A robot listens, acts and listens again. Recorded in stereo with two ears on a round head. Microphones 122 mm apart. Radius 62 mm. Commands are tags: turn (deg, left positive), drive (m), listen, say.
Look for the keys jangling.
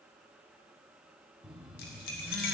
<turn deg="75"/>
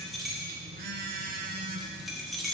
<say>Found it: keys jangling, straight ahead.</say>